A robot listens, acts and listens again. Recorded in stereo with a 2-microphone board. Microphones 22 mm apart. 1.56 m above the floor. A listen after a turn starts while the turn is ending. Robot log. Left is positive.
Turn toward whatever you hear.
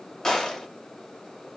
note: The gunshot: about 30° left or 150° left.
cmd yaw +30
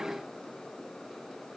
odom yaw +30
cmd idle
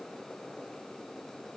end: I heard a gunshot, but can't make it out now. It was about straight ahead or 120° left.